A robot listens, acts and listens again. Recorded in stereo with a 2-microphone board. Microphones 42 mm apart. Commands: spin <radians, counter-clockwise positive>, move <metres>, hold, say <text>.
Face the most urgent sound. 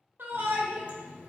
spin -0.96
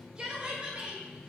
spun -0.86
spin -0.44
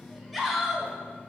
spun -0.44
say Found it: a shout, straight ahead.